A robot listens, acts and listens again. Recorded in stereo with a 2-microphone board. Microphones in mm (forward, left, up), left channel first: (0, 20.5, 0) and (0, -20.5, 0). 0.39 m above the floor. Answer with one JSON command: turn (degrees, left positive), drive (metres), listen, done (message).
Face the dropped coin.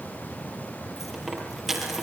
{"turn": -30}
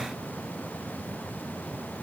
{"listen": true}
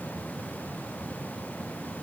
{"done": "I heard a dropped coin, but can't make it out now. It was about 25° left or 145° right."}